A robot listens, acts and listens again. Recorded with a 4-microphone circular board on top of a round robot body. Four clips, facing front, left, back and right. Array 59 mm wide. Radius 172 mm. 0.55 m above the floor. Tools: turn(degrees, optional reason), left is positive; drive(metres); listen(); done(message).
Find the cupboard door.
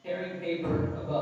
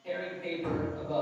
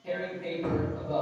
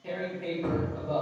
turn(degrees=-135, reason="The cupboard door: 135° right.")
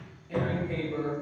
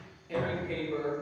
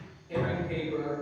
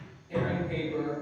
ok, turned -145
turn(degrees=10, reason="The cupboard door is now 10° left.")
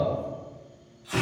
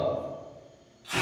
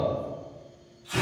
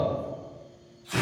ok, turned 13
listen()
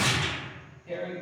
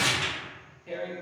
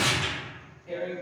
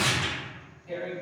listen()
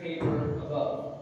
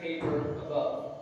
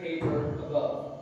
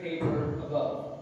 done("Found it: a cupboard door, straight ahead.")